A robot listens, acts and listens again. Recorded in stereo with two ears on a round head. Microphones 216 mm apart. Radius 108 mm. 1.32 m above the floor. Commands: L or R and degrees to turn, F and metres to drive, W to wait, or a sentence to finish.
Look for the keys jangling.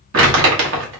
W
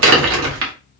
W
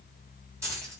R30
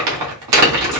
W
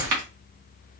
W
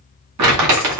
I heard keys jangling, but can't make it out now. It was about 15° left or 135° right.